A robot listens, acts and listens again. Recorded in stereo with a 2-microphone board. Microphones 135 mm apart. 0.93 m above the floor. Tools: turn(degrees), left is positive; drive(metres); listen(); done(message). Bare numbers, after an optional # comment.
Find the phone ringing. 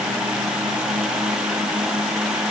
listen()
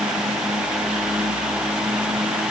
listen()
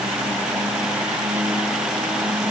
done("I can't make out a phone ringing.")